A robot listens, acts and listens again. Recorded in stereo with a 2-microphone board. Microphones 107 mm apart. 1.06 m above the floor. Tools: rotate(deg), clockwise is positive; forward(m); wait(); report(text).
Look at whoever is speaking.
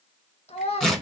rotate(-90)
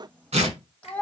rotate(-15)
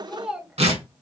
report("Found it: a child speaking, straight ahead, 1 to 2 m away.")